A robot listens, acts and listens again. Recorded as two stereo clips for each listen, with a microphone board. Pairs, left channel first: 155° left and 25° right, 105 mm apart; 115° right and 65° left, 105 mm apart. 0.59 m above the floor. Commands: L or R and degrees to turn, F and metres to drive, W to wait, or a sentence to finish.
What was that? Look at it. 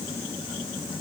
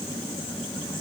W
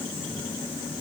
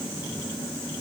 W
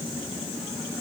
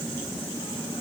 I can't make out anything to turn to.